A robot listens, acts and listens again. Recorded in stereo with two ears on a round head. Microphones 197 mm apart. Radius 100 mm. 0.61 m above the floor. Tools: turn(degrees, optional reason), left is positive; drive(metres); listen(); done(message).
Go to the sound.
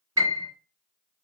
turn(degrees=-30)
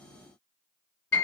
turn(degrees=15, reason="So it is at 15° left.")
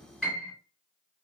drive(metres=1.0)
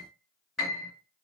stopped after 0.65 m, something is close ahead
done("Arrived at the piano, straight ahead.")